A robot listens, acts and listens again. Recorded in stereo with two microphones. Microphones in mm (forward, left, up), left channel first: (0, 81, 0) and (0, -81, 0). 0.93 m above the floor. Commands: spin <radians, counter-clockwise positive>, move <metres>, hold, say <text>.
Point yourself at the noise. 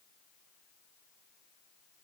hold
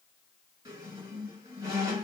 spin -0.35
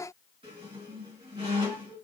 spin -2.36
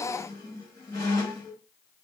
spin 0.44
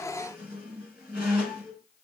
spin -0.26
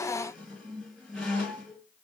say Found it: a squeak, straight ahead, 1 to 2 m away.